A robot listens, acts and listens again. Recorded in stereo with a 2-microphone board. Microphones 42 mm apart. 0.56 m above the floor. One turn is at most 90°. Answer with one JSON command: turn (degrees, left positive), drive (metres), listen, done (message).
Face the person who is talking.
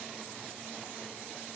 {"listen": true}
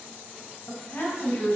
{"turn": 60}
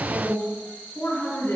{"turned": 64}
{"turn": 55}
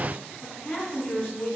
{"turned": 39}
{"turn": 20}
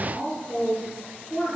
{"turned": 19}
{"done": "Found it: a woman speaking, straight ahead."}